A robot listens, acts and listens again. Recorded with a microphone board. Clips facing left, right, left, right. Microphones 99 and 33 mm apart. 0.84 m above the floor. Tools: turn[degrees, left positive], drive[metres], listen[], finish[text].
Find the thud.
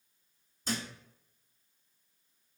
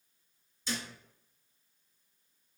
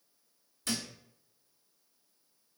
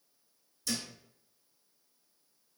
Thought: The thud: about 50° left or 130° left.
Action: turn[50]
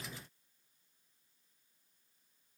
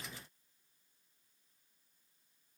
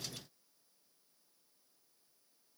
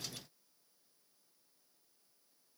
Action: listen[]
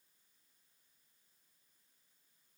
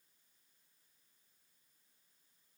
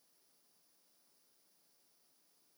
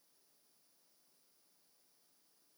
Action: finish[I heard a thud, but can't make it out now. It was about straight ahead or 80° left.]